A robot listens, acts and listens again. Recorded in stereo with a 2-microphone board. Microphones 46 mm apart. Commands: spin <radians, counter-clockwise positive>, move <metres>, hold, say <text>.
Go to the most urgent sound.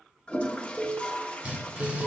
spin -0.52
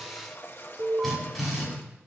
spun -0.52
spin -2.53
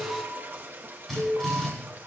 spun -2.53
spin 0.44
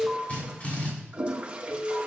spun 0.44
move 1.0
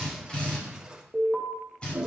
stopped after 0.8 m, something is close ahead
spin 0.17
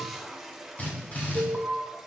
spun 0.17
say Something is in my way. I am facing the alarm but have not reached it.